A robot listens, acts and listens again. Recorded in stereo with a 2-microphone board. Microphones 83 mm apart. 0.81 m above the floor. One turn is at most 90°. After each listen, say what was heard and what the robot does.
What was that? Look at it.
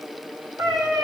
The cat meowing: about 50° right or 130° right. Turn 50° right.
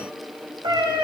So it is at 80° right. Turn 80° right.
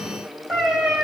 Facing the cat meowing.